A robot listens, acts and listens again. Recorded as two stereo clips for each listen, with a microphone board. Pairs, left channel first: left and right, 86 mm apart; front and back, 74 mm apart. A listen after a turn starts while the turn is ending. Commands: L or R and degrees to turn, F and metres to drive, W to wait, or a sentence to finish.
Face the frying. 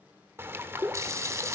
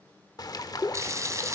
R140
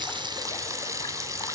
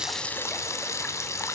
R45
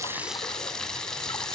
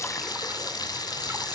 L10
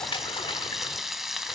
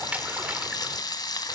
Found it: frying, straight ahead, 1 to 2 m away.